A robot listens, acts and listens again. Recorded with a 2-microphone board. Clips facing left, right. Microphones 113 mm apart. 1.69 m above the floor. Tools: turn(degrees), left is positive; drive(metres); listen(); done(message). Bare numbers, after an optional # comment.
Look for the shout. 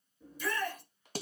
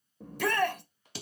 # The shout: about 70° right or 110° right.
turn(-70)
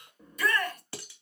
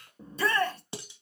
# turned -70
# So it is at 30° right.
turn(-30)
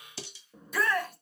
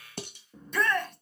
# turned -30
done("Facing the shout.")